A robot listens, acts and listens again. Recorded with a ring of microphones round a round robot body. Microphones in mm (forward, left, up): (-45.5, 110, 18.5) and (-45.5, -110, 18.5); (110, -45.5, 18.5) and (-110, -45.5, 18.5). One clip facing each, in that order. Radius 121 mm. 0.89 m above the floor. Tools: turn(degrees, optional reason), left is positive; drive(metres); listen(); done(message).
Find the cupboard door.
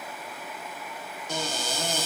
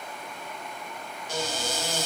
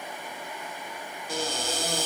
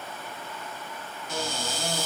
turn(degrees=65, reason="The cupboard door: 65° left.")
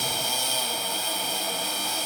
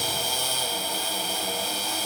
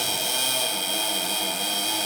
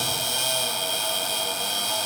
turn(degrees=-10, reason="The cupboard door is now 10° right.")
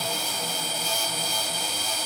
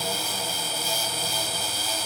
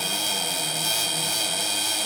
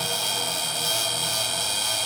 done("Facing the cupboard door.")